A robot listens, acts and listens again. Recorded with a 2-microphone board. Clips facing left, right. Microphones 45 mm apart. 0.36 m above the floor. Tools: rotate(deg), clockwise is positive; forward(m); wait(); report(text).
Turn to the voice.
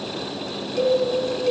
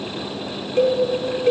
wait()
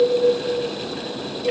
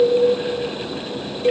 wait()
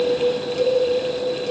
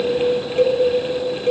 report("I can't make out anyone speaking, only a cowbell.")